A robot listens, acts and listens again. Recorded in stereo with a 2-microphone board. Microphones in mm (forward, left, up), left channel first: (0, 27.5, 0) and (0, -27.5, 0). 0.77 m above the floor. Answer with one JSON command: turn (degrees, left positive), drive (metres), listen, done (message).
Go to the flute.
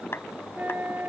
{"turn": -40}
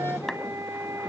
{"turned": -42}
{"turn": -95}
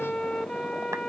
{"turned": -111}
{"turn": 15}
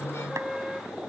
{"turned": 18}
{"drive": 1.0}
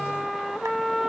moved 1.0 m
{"drive": 1.0}
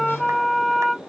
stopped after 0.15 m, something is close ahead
{"done": "Arrived at the flute, straight ahead."}